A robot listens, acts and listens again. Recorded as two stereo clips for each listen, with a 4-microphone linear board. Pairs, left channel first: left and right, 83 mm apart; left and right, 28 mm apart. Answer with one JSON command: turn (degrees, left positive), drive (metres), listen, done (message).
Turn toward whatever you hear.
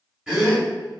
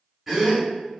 {"turn": -30}
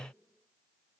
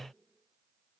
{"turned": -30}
{"listen": true}
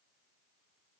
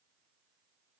{"done": "I heard a gasp, but can't make it out now. It was about 25° left or 145° right."}